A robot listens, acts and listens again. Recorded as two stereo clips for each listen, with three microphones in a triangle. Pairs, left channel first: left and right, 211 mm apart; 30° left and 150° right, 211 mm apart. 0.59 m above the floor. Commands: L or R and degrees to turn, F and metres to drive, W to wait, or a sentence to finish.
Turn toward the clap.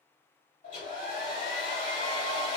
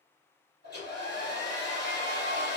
W
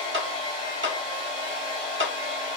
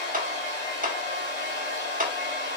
R100
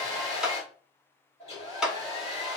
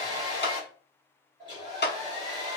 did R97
Facing the clap, 1 to 2 m away.